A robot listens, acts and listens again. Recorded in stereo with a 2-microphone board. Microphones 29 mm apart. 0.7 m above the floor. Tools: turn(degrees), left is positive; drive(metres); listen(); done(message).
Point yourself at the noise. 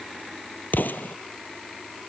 turn(degrees=90)
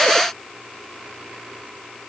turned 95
done("Facing where the explosion came from. I can't hear it now.")